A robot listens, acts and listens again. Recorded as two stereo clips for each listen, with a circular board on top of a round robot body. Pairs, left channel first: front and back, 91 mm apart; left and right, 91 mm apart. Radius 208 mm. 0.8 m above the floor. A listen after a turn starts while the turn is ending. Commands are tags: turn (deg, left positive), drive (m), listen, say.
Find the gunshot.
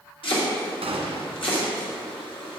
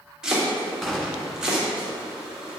<turn deg="175"/>
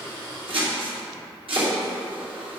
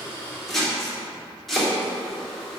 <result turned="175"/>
<say>I heard a gunshot from this way, but can't make it out now.</say>